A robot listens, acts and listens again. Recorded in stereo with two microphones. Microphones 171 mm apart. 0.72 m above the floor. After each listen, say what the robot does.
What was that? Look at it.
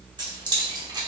Turn 25° right.
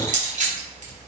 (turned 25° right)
Turn 130° right.
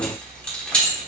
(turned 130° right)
Facing the keys jangling.